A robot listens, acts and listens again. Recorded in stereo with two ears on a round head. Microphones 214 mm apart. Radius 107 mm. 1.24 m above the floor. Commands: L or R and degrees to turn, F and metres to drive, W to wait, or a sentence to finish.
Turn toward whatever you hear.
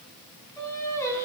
L30
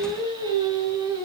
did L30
R20
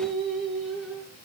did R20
Facing the singing.